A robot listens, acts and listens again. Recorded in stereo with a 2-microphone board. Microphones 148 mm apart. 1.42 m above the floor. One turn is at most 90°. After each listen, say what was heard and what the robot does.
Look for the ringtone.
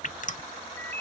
Turn 30° left.
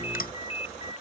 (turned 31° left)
So it is at 140° left. Turn 90° left.
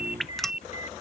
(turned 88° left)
The ringtone is now 50° left. Turn 50° left.
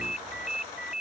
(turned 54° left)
Facing the ringtone.